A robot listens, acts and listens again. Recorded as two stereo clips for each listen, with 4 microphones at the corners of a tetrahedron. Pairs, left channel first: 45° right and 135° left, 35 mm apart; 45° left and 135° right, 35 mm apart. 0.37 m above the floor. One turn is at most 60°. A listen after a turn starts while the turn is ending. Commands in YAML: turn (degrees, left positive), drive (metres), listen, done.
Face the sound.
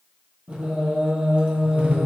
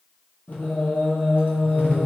turn: 60
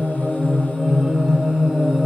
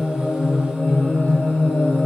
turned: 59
turn: 55
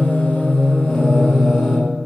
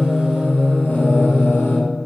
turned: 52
turn: 25
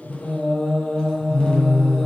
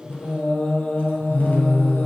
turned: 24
turn: 15
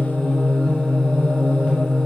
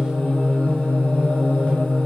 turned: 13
done: "Found it: singing, straight ahead, 1 to 2 m away."